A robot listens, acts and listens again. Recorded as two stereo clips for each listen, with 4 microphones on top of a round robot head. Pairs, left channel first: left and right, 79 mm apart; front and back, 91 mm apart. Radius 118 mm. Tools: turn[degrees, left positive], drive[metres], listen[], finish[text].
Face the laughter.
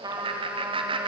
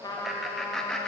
Thought: The laughter: 80° right.
Action: turn[-80]
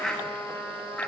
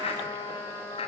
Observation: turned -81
Thought: The laughter is now 15° left.
Action: turn[15]
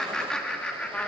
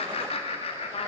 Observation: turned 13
Thought: The laughter is now 15° left.
Action: turn[15]
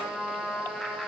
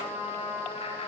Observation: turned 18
Action: listen[]
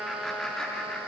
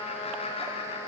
Action: listen[]
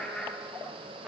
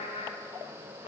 Thought: The laughter is now 10° left.
Action: turn[10]
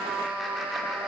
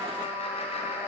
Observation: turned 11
Action: listen[]
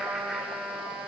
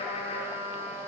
Action: listen[]
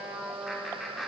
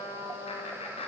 Action: finish[Found it: laughter, straight ahead.]